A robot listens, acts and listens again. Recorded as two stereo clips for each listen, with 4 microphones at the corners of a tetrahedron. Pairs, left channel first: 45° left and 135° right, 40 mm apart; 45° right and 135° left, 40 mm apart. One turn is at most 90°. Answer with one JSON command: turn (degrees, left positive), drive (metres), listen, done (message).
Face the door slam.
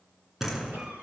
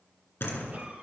{"turn": -55}
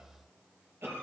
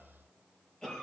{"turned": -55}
{"done": "I heard a door slam from this way, but can't make it out now."}